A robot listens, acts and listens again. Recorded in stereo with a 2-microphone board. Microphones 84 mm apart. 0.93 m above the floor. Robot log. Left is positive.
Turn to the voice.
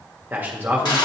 note: The man speaking: about 20° right or 160° right.
cmd yaw -20
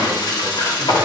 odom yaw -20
cmd idle
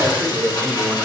note: So it is at 135° right.
cmd yaw -135
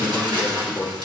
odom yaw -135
note: The man speaking is now 30° left.
cmd yaw +30
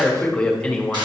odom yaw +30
note: The man speaking is now 10° left.
cmd yaw +10
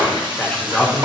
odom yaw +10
end: Facing the man speaking.